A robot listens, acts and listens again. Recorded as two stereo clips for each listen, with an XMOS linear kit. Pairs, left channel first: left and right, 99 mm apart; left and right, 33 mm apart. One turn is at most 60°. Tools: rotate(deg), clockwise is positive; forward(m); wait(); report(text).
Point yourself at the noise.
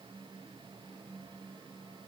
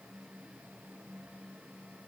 wait()
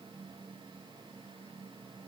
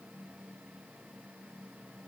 wait()
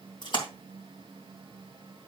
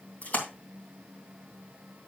rotate(-50)
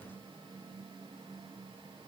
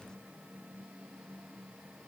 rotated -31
wait()
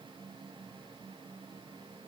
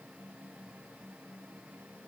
report("I heard a splash, but can't make it out now. It was about 20° left or 95° left.")